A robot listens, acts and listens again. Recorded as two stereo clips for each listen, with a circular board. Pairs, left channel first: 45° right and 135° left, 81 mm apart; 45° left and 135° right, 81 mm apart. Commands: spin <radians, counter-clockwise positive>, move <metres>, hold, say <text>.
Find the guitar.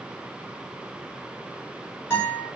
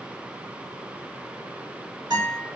spin -1.83
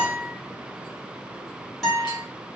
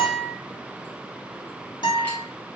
spin 0.79
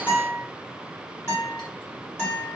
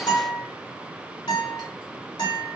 spin 0.26
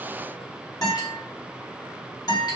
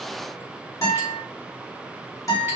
say Facing the guitar.